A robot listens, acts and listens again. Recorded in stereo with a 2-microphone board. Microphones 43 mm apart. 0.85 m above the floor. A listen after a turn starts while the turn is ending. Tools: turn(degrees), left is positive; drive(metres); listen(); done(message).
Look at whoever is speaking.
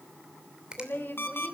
turn(degrees=60)
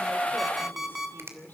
turn(degrees=50)
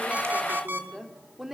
done("Found it: a woman speaking, straight ahead.")